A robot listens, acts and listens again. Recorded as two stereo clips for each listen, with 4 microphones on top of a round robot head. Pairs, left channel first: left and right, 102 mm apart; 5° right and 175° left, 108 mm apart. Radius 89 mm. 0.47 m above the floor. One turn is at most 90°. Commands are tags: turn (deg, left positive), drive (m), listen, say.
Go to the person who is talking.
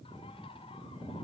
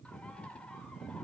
<listen/>
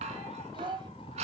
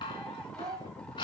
<turn deg="-90"/>
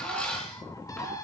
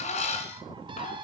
<turn deg="-40"/>
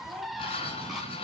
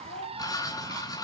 <turn deg="-15"/>
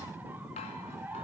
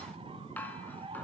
<listen/>
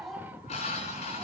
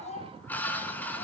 <drive m="1.0"/>
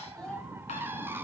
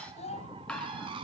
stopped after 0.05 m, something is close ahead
<say>Blocked. The child speaking is further on, straight ahead.</say>